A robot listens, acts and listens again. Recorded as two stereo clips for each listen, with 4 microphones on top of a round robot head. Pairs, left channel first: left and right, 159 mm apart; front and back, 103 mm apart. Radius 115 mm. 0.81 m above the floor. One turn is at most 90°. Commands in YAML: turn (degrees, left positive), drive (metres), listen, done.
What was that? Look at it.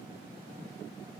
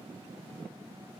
listen: true
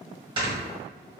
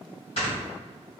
turn: -30
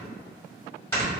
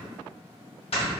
turn: 15
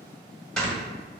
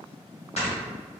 done: "Found it: snoring, straight ahead."